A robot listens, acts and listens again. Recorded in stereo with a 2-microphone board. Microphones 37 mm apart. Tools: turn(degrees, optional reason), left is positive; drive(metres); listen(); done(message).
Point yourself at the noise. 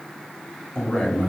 turn(degrees=25, reason="The man speaking: about 25° left or 155° left.")
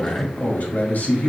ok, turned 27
turn(degrees=130, reason="So it is at 130° left.")
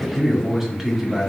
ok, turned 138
turn(degrees=-10, reason="The man speaking is now 10° right.")
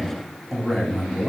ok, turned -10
done("Facing the man speaking.")